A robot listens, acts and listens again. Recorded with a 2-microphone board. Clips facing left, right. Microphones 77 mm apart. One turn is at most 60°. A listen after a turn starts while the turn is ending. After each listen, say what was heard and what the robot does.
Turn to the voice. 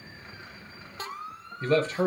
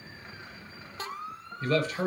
The man speaking: about 25° left or 155° left. Turn 25° left.
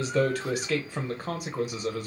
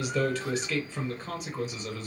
So it is at 125° left. Turn 60° left.
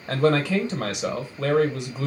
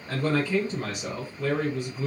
The man speaking is now 75° left. Turn 60° left.
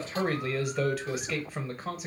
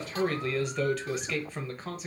Facing the man speaking.